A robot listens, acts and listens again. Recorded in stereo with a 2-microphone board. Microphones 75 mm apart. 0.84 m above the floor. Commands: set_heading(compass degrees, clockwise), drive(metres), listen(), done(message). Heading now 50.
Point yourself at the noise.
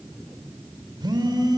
set_heading(140)
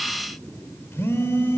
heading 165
set_heading(130)
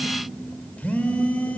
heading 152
set_heading(132)
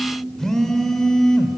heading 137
done("Found it: a phone buzzing, straight ahead, 2 to 4 m away.")